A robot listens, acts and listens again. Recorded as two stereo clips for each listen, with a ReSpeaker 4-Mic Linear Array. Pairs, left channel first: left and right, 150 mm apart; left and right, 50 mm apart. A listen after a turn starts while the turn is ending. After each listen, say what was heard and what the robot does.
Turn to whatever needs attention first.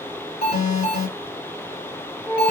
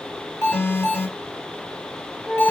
The alarm: about 65° left or 115° left. Turn 65° left.
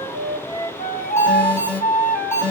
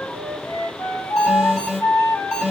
So it is at 15° left. Turn 15° left.
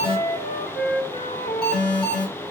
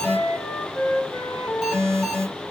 Facing the alarm, 2 to 4 m away.